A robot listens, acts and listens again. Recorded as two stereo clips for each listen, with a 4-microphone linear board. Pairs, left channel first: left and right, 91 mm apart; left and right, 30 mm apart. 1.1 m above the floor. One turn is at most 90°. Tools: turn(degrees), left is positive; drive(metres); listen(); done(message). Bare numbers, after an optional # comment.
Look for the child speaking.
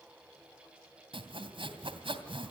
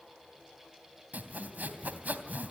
listen()
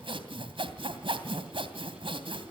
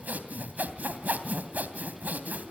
listen()
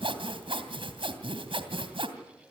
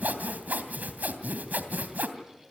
done("I can't make out a child speaking to turn to.")